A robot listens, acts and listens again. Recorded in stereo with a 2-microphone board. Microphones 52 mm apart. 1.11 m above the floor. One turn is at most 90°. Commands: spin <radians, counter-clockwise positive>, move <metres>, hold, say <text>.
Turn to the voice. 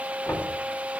hold
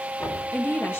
spin 0.79
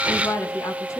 spin 1.57
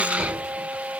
hold
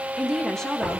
spin 0.17
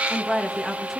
say Found it: a woman speaking, straight ahead.